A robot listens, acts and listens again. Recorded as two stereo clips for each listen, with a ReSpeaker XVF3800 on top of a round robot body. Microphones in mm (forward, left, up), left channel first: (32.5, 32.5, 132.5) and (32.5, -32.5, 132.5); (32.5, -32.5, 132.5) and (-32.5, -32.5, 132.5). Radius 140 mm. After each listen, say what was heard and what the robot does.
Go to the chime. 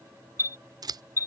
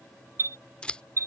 The chime: 130° left. Turn 130° left.
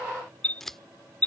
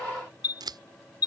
The chime is now 20° left. Turn 20° left.
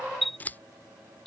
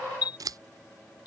Drive 1.0 m forward.
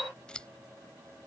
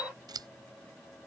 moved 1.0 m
Keep listening.
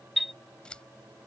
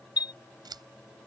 Drive 1.0 m forward.
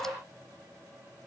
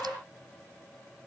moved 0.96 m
Keep listening.
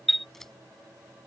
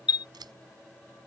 Drive 1.0 m forward.
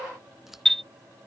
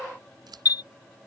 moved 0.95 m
Drive 1.0 m forward.
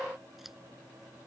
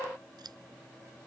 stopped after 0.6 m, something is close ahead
Keep listening.
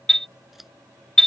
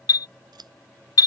Arrived at the chime, straight ahead.